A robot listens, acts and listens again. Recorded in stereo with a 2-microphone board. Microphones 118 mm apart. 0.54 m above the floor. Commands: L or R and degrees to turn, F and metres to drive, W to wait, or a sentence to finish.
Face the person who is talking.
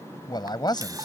L35
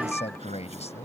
L105
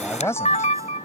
L25
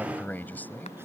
L15
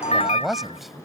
Facing the man speaking.